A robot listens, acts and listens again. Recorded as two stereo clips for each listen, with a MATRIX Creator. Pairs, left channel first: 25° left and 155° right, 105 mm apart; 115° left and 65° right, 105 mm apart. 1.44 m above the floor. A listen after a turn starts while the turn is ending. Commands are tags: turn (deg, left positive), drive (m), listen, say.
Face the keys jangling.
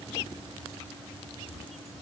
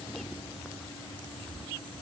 <listen/>
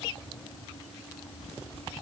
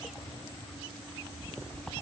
<listen/>
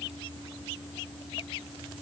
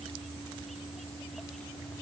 <say>I can't make out keys jangling.</say>